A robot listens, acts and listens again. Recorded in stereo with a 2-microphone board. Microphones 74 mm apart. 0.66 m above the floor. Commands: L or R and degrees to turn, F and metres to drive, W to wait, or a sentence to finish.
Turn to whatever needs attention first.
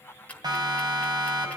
R70
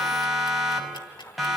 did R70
Facing the siren.